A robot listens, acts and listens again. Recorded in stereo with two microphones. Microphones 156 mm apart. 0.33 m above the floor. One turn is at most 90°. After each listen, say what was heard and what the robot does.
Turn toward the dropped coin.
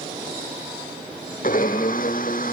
Keep listening.
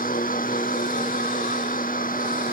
Keep listening.
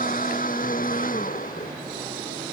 I can't make out a dropped coin, only a blender.